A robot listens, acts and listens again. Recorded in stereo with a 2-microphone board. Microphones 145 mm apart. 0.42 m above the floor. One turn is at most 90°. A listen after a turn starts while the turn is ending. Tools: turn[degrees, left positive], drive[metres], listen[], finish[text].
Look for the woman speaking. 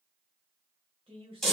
Thought: The woman speaking: about 40° right or 140° right.
Action: turn[-40]
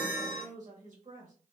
Thought: So it is at 95° right.
Action: turn[-90]
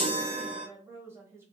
Thought: The woman speaking is now 20° right.
Action: turn[-20]
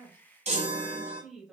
Action: finish[Facing the woman speaking, 1 to 2 m away.]